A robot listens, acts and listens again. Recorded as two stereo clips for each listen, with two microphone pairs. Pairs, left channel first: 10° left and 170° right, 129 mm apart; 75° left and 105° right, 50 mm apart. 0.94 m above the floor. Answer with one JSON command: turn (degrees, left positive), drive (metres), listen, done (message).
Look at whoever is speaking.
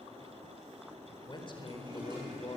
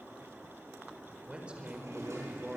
{"turn": -40}
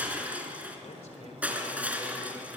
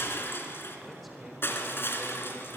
{"turn": -15}
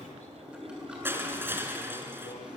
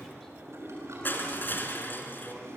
{"listen": true}
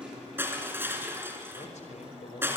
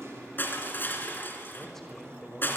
{"turn": -10}
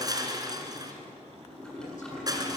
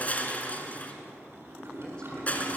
{"listen": true}
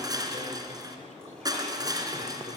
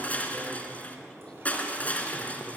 {"listen": true}
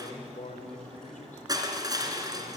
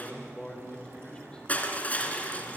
{"done": "Found it: a man speaking, straight ahead, over 4 m away."}